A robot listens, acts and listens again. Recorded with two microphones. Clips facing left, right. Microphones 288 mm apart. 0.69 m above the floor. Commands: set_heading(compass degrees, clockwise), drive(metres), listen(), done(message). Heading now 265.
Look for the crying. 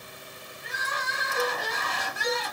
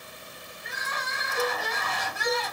set_heading(220)
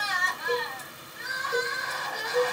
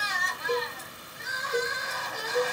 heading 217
set_heading(132)
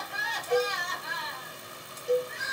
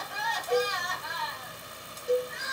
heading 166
set_heading(131)
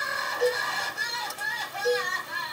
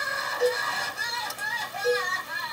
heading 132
done("Found it: crying, straight ahead, 1 to 2 m away.")